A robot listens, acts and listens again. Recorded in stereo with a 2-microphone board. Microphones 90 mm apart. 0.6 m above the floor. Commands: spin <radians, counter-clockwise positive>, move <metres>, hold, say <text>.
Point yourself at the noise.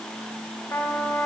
spin 0.52
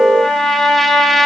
say Facing the trumpet, 2 to 4 m away.